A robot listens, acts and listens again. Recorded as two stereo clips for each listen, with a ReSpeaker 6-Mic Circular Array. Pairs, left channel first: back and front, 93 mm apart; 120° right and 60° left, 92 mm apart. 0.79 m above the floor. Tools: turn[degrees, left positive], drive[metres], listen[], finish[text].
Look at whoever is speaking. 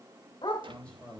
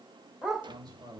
Thought: The man speaking: 100° left.
Action: turn[100]
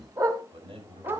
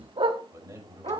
Action: finish[Facing the man speaking, over 4 m away.]